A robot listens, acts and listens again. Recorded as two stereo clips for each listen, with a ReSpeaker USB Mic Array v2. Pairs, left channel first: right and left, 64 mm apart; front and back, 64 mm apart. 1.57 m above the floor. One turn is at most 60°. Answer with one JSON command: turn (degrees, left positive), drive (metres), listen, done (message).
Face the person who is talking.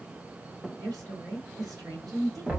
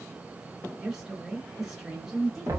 {"turn": 60}
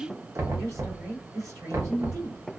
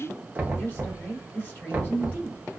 {"turn": 60}
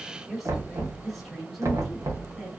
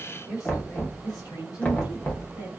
{"done": "Found it: a woman speaking, straight ahead."}